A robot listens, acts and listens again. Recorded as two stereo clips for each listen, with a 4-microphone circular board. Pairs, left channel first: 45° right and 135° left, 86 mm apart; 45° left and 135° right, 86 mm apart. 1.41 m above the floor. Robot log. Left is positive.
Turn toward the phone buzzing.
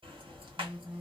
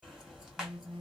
note: The phone buzzing: 155° right.
cmd yaw -155
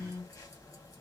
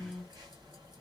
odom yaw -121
note: The phone buzzing is now 30° right.
cmd yaw -30
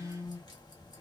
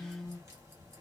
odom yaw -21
note: The phone buzzing is now 10° right.
cmd yaw -10
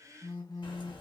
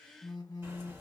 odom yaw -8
end: Found it: a phone buzzing, straight ahead.